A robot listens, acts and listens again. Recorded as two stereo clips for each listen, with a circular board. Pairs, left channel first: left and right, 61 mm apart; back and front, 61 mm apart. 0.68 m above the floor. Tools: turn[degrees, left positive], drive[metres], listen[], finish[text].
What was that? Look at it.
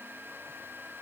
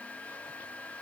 Action: listen[]
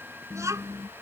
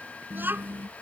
Thought: The child speaking: 55° right.
Action: turn[-55]
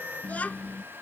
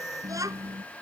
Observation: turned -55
Thought: The child speaking is now 25° left.
Action: turn[25]
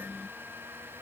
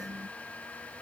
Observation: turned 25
Action: listen[]
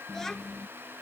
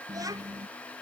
Thought: The child speaking is now 10° left.
Action: turn[10]
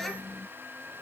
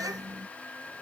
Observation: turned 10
Action: finish[Found it: a child speaking, straight ahead.]